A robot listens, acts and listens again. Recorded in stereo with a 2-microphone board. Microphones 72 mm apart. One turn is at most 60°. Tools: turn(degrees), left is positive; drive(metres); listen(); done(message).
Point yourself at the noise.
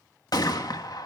turn(degrees=60)
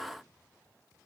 listen()
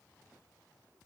done("I heard a gunshot, but can't make it out now. It was about straight ahead or 60° left.")